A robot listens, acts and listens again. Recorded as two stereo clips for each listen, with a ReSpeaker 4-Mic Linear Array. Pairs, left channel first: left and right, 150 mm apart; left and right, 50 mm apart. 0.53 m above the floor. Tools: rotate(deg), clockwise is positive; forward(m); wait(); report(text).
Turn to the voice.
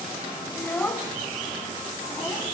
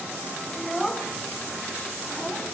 rotate(-30)
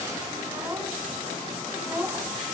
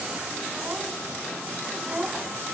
rotate(15)
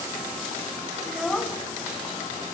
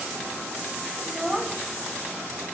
report("Found it: a child speaking, straight ahead, 2 to 4 m away.")